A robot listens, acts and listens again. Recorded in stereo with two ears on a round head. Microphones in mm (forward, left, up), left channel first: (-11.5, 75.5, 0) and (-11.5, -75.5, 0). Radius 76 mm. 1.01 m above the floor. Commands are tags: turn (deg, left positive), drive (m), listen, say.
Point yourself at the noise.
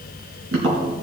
<turn deg="-90"/>
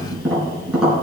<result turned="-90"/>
<say>Found it: tapping, straight ahead.</say>